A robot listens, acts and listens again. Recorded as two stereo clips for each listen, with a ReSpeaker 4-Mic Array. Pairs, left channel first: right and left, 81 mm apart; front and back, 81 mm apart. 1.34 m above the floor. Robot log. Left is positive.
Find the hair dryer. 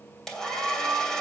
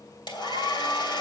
note: The hair dryer: 10° right.
cmd yaw -10
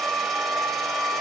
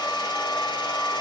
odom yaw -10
end: Facing the hair dryer, 2 to 4 m away.